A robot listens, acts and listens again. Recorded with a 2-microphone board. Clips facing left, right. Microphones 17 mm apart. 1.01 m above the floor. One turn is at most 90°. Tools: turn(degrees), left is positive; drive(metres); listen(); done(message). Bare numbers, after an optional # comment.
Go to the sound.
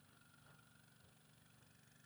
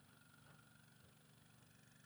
listen()
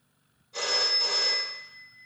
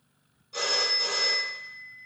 turn(-90)
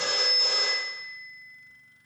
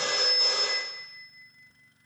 drive(1.0)
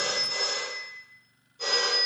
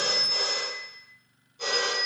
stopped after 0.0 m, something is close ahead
done("Something is in my way. I am facing the phone ringing but have not reached it.")